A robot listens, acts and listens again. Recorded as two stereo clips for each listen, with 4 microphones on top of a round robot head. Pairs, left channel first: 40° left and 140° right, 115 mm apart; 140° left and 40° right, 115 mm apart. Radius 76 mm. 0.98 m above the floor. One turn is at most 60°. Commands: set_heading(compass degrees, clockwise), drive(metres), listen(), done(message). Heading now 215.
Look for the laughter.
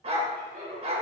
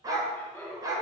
set_heading(275)
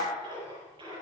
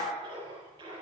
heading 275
set_heading(335)
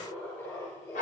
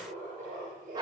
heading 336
set_heading(6)
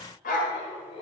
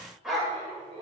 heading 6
done("Found it: laughter, straight ahead.")